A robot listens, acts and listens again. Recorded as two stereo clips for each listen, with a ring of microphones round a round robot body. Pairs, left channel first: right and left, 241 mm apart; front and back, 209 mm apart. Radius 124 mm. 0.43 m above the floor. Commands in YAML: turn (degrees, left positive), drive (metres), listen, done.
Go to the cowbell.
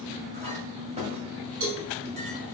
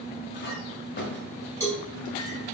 turn: 75
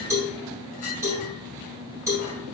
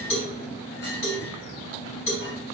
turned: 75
turn: 10
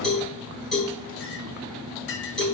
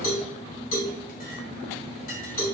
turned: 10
drive: 1.0
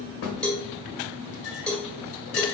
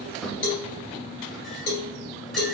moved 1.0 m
drive: 1.0
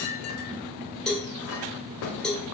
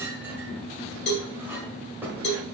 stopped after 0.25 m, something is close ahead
done: "I am next to the cowbell."